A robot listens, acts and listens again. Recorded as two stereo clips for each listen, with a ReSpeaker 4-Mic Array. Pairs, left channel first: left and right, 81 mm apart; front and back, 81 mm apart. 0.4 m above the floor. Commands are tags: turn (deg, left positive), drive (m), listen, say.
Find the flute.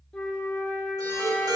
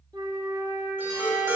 <turn deg="165"/>
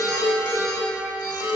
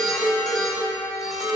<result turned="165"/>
<turn deg="20"/>
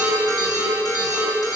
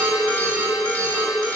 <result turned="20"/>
<listen/>
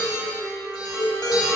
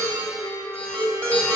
<say>Found it: a flute, straight ahead, under 1 m away.</say>